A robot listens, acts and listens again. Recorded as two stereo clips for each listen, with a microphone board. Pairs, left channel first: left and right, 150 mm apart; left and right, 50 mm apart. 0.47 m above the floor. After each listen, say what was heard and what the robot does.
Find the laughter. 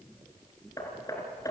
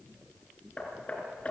Keep listening.
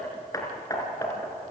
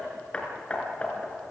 Keep listening.
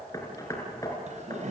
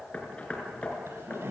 The laughter: about 50° right or 130° right. Turn 50° right.
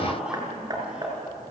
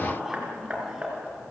Found it: laughter, straight ahead, over 4 m away.